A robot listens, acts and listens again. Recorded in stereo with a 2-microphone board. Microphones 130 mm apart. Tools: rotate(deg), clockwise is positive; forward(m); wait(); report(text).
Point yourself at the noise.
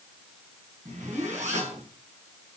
rotate(65)
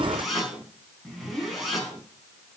report("Found it: a zipper, straight ahead, over 4 m away.")